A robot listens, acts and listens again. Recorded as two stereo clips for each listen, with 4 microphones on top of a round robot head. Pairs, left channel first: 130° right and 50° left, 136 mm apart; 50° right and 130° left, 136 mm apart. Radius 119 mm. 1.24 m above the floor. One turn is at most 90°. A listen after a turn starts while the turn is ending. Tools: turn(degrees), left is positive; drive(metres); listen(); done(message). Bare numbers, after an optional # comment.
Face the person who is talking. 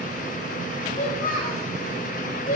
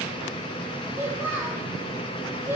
# The child speaking: 155° right.
turn(-90)
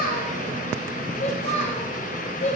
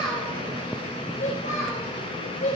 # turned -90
# The child speaking is now 90° right.
turn(-90)
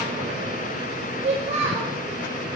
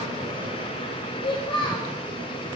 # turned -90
done("Facing the child speaking.")